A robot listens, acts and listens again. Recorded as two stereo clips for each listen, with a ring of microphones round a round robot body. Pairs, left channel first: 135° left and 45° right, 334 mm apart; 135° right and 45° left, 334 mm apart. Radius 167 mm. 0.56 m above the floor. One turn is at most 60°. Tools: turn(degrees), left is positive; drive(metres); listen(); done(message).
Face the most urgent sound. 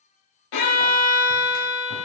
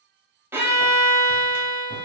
listen()
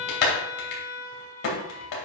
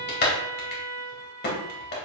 listen()
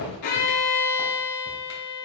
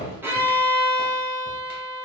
done("I can't make out anything urgent to turn to.")